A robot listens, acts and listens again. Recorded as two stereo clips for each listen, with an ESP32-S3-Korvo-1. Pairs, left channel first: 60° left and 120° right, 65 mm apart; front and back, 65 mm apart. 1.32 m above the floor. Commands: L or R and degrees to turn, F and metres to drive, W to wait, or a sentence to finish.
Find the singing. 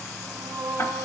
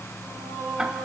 R95
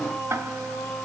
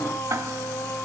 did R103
R10
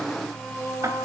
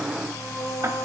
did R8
Facing the singing.